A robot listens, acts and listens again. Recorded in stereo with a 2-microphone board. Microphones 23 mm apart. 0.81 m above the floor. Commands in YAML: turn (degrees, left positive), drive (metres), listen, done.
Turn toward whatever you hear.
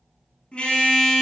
turn: 55
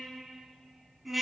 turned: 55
done: "Facing the car horn."